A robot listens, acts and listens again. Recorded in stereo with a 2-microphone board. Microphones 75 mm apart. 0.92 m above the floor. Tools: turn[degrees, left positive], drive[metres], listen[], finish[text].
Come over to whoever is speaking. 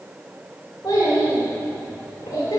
Thought: The child speaking: about 55° left or 125° left.
Action: turn[55]
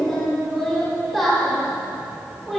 Action: drive[1.0]
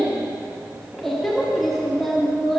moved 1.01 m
Action: drive[1.0]
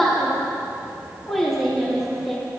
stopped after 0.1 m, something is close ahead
Action: finish[Arrived at the child speaking, straight ahead.]